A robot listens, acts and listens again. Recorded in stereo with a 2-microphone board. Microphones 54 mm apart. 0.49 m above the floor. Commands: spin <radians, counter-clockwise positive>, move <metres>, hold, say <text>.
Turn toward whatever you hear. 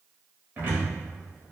spin -0.70
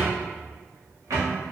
spin -1.75
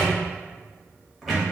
say Found it: a cupboard door, straight ahead.